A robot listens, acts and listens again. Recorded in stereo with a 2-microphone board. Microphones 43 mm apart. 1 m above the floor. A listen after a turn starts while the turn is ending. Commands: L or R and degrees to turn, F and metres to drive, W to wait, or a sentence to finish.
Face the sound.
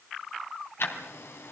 L70
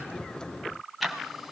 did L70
Facing the ticking, 2 to 4 m away.